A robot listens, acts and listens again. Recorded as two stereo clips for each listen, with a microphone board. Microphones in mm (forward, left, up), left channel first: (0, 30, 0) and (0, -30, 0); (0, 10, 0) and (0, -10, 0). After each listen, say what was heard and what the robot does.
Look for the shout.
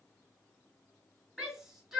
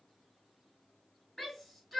Turn 30° right.
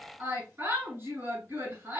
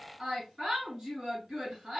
So it is at 145° right. Turn 145° right.
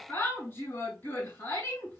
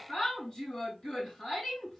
The shout is now 35° left. Turn 35° left.
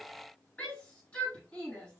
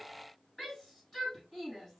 The shout is now 20° left. Turn 20° left.
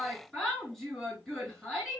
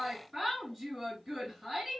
Found it: a shout, straight ahead.